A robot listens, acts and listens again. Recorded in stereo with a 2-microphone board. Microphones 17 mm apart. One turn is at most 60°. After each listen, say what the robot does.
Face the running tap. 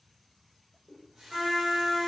Turn 55° right.
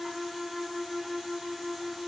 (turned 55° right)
Keep listening.
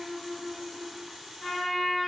Turn 45° right.
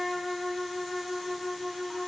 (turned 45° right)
Keep listening.
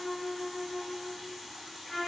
Found it: a running tap, straight ahead.